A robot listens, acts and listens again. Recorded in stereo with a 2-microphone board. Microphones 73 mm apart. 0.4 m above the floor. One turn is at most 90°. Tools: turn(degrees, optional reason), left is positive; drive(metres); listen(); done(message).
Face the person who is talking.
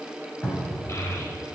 turn(degrees=40, reason="The child speaking: about 40° left or 140° left.")
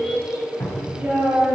turn(degrees=-20, reason="So it is at 20° right.")
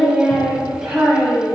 turn(degrees=-10, reason="The child speaking is now 10° right.")
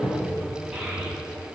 turn(degrees=-10, reason="The child speaking is now 10° right.")
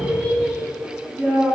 done("Found it: a child speaking, straight ahead.")